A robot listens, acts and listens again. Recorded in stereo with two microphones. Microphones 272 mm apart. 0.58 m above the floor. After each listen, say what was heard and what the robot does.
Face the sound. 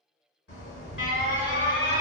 The alarm: about 50° left or 130° left. Turn 50° left.
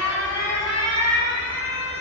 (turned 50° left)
So it is at 85° left. Turn 85° left.
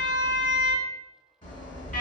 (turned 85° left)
The alarm is now 30° left. Turn 30° left.
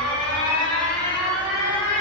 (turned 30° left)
Found it: an alarm, straight ahead.